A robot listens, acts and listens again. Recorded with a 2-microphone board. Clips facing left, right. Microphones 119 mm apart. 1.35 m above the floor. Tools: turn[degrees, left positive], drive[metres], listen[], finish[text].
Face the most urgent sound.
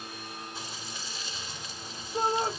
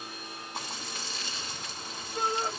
Thought: The shout: about 40° left or 140° left.
Action: turn[40]
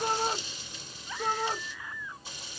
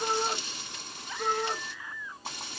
Action: finish[Facing the shout.]